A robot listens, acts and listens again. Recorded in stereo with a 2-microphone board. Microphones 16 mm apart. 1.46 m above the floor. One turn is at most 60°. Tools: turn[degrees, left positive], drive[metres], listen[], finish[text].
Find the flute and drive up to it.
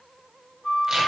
Action: turn[60]
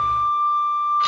Thought: So it is at 20° left.
Action: turn[20]
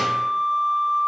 Action: drive[1.0]
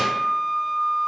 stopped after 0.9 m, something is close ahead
Thought: The flute is now 10° left.
Action: turn[10]
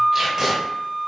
Action: finish[Arrived at the flute, straight ahead.]